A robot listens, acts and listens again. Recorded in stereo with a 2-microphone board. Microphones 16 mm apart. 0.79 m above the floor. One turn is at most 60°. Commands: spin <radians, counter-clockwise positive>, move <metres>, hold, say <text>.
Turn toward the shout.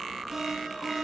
hold
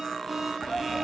spin 0.52
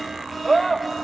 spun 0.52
spin 0.17
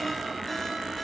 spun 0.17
hold
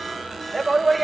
say Facing the shout.